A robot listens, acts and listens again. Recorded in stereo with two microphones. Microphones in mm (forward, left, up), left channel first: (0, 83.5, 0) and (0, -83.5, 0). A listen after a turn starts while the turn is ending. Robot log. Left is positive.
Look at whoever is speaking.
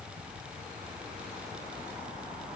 cmd idle
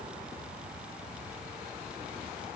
cmd idle
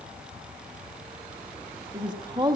note: The woman speaking: about 25° right or 155° right.
cmd yaw -25
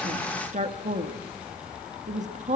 note: So it is at 130° right.
cmd yaw -130
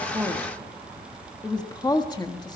note: The woman speaking is now 25° left.
cmd yaw +25
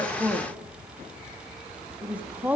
note: The woman speaking is now 10° right.
cmd yaw -10
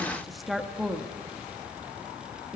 end: Facing the woman speaking, 1 to 2 m away.